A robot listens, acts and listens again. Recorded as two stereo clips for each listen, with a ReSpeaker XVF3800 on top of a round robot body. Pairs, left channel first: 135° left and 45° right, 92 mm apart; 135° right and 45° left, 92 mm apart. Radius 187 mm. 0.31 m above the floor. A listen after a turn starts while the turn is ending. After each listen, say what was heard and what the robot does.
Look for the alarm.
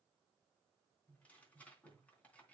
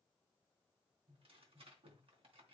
Keep listening.
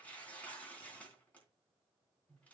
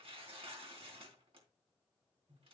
Keep listening.
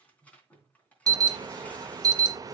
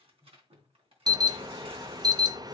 Facing the alarm.